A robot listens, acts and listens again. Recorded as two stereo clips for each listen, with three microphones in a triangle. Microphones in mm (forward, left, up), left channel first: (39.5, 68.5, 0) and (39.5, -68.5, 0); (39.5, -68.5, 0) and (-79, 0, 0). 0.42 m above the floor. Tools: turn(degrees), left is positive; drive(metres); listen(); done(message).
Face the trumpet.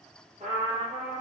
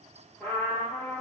turn(degrees=-110)
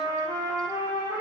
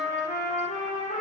turn(degrees=-25)
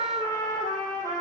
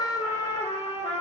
turn(degrees=15)
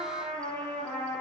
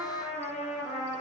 done("Facing the trumpet, 1 to 2 m away.")